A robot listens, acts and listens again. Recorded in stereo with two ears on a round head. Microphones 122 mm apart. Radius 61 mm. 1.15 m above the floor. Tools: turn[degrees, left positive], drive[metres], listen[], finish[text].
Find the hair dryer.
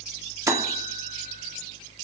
Action: listen[]
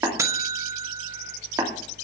Action: listen[]
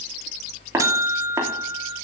Action: finish[I can't make out a hair dryer, only tapping and a buzzer.]